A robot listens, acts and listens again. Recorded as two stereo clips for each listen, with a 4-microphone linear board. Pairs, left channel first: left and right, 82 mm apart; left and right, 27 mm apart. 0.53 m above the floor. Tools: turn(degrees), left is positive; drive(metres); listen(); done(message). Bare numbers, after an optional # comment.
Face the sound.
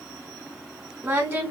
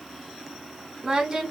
# The singing: about 25° right or 155° right.
turn(-25)
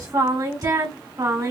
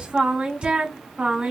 # So it is at 125° right.
turn(-125)
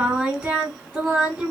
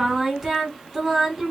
# The singing is now 10° right.
turn(-10)
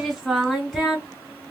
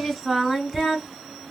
done("Found it: singing, straight ahead.")